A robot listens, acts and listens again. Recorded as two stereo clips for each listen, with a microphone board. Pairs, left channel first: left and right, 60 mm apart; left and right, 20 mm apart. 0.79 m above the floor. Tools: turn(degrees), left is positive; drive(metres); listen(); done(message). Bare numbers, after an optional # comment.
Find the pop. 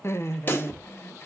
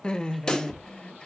# The pop: about 40° left or 140° left.
turn(40)
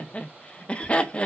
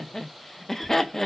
listen()
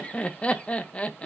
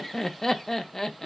done("I heard a pop, but can't make it out now. It was about straight ahead or 100° left.")